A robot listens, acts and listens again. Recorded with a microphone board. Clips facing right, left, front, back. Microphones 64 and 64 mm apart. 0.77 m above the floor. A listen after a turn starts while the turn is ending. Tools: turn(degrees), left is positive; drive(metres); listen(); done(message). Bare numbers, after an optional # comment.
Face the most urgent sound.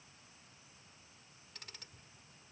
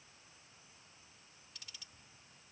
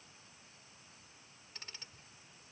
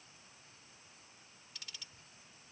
listen()
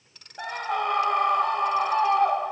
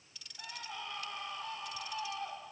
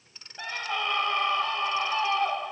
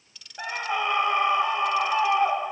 # The scream: 110° right.
turn(-110)
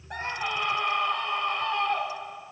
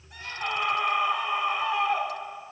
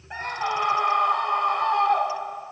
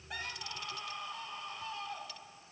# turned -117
# The scream is now 10° left.
turn(10)
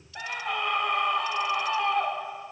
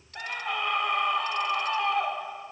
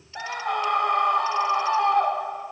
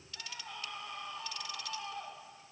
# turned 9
done("Facing the scream.")